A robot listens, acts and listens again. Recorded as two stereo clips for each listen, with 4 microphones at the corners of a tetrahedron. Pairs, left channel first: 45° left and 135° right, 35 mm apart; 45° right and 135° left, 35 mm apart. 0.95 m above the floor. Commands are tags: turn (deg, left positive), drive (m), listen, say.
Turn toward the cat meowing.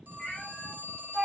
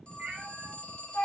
<turn deg="105"/>
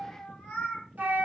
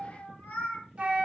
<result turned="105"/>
<turn deg="-15"/>
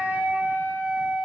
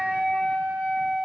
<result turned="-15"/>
<listen/>
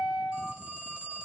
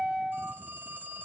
<listen/>
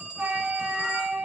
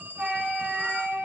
<say>Facing where the cat meowing came from. I can't hear it now.</say>